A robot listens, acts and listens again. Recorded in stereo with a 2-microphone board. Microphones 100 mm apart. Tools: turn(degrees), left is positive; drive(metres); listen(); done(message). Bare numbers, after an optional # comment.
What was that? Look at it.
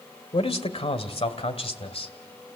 # The man speaking: about 70° left or 110° left.
turn(70)
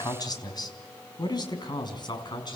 # So it is at 45° left.
turn(45)
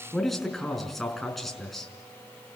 done("Found it: a man speaking, straight ahead, over 4 m away.")